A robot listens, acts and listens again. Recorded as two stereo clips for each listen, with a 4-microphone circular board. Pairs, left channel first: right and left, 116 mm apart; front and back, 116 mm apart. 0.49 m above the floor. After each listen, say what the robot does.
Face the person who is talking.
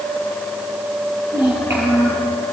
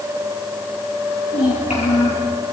Turn 20° left.
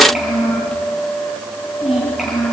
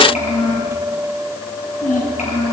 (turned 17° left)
Found it: a child speaking, straight ahead.